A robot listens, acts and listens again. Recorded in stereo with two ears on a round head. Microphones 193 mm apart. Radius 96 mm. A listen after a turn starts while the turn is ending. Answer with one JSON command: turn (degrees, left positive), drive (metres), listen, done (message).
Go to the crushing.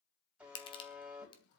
{"turn": 25}
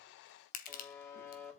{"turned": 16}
{"turn": 140}
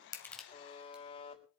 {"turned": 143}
{"listen": true}
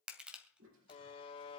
{"drive": 1.0}
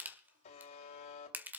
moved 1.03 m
{"turn": -10}
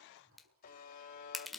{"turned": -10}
{"drive": 1.0}
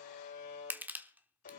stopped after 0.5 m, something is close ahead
{"turn": -10}
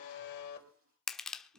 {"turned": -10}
{"done": "I am next to the crushing."}